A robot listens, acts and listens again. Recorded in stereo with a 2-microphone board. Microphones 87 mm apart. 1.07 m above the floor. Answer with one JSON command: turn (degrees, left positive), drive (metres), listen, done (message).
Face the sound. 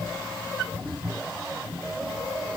{"listen": true}
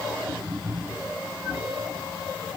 {"listen": true}
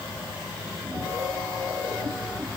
{"done": "I can't make out anything."}